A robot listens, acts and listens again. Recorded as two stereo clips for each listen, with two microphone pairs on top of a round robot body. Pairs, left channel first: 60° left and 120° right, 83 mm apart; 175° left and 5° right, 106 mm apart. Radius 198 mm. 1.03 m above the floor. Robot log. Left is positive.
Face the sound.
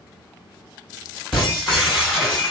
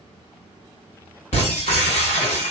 note: The breaking glass: 155° left.
cmd yaw +155
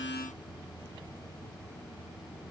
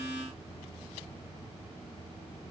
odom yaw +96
note: Nothing new. It was at 60° left.
cmd yaw +60
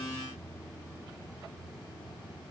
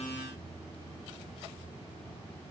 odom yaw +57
end: Facing where the breaking glass came from. I can't hear it now.